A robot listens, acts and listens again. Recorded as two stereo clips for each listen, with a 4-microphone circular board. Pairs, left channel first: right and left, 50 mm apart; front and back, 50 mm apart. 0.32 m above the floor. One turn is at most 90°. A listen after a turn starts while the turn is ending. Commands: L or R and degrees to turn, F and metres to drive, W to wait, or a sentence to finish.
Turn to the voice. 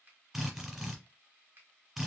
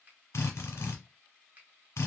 W
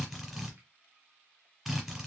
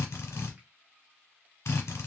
W
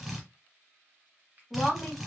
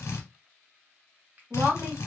R90
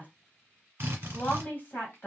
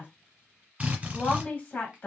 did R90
R45
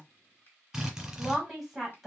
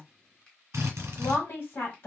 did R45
Facing the woman speaking, 1 to 2 m away.